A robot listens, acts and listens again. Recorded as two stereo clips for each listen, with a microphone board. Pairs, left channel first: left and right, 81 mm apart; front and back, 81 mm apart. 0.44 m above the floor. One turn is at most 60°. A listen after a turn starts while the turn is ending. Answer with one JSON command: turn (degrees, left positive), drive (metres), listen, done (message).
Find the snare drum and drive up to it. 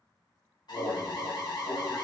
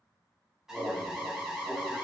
{"listen": true}
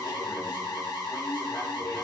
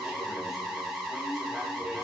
{"listen": true}
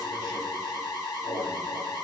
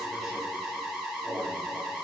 {"done": "I can't make out a snare drum, only an alarm."}